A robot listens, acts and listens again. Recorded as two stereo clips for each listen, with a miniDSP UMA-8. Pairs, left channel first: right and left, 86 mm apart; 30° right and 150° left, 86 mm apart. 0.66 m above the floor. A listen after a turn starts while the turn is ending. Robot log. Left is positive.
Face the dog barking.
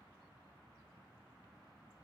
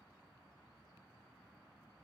cmd idle
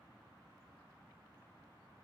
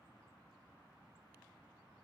cmd idle
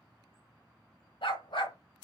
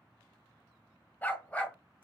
note: The dog barking: 105° right.
cmd yaw -105
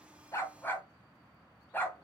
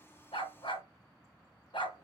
note: The dog barking is now 25° right.
cmd yaw -25
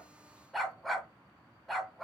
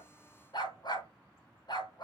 end: Found it: a dog barking, straight ahead.